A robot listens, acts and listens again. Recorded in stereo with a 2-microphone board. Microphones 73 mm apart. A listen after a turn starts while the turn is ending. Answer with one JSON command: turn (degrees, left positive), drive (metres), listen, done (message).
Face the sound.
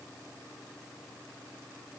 {"listen": true}
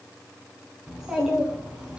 {"turn": -30}
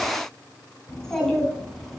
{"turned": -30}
{"done": "Found it: a child speaking, straight ahead."}